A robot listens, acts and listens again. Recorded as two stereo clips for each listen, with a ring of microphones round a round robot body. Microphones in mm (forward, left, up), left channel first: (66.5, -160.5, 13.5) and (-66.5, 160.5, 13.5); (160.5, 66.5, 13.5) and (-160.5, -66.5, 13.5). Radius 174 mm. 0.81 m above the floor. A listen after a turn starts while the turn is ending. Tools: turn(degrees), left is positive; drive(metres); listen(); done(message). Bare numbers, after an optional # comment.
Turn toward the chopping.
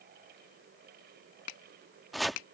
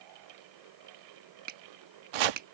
# The chopping: 160° right.
turn(-160)
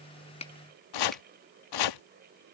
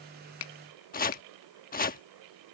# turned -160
# The chopping is now 45° right.
turn(-45)
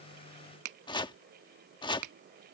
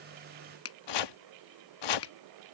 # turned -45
# The chopping is now 10° left.
turn(10)
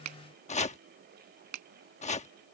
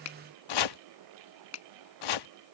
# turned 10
done("Found it: chopping, straight ahead.")